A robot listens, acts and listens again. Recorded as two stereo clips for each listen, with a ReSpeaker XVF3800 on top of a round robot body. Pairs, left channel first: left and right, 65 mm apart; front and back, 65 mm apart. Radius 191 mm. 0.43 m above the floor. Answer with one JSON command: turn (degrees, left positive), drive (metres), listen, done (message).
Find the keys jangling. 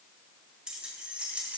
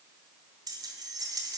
{"turn": -160}
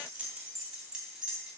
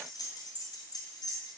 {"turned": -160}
{"turn": -10}
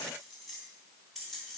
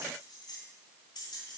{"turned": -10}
{"done": "Found it: keys jangling, straight ahead."}